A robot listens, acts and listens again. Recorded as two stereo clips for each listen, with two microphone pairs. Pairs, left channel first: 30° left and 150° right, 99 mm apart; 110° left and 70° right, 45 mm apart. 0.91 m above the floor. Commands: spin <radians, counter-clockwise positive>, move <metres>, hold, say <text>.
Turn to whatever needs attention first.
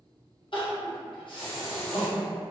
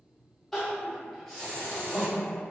spin 0.44
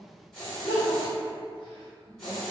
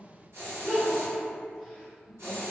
spin 0.26
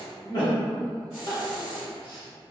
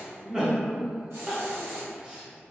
say Found it: crying, straight ahead, under 1 m away.